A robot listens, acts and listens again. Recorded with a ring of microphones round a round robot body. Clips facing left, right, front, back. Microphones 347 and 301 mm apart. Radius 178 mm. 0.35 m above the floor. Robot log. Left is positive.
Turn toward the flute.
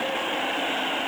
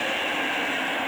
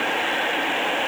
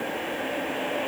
cmd idle
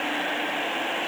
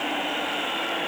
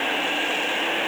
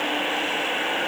cmd idle
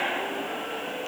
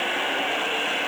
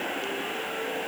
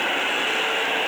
end: I can't make out a flute.